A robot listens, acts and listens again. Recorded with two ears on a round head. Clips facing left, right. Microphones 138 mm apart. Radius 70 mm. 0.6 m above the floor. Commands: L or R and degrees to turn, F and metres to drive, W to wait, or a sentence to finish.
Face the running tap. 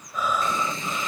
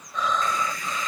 L20
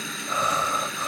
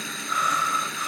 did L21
Facing the running tap.